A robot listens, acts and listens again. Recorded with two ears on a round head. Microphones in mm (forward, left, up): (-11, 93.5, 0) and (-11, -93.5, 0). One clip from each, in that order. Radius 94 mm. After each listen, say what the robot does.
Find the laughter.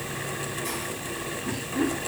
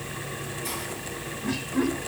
Turn 70° right.
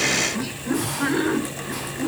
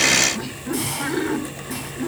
Turn 20° right.
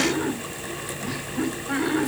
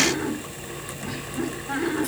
Turn 10° right.
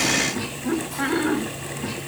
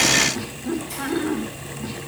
Facing the laughter, over 4 m away.